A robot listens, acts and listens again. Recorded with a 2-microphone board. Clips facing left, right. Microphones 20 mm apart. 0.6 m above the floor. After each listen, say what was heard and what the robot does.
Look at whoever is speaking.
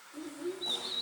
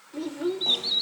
The child speaking: about 55° right or 125° right. Turn 55° right.
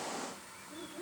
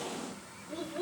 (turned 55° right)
So it is at 70° right. Turn 70° right.
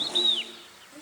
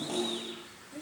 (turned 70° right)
Facing the child speaking, 2 to 4 m away.